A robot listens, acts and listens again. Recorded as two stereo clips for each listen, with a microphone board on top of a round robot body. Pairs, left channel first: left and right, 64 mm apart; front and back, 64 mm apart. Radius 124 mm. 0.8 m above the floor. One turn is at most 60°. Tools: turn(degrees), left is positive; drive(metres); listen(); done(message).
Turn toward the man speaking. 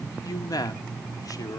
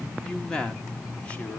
turn(degrees=60)
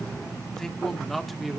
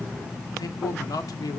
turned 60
done("Facing the man speaking.")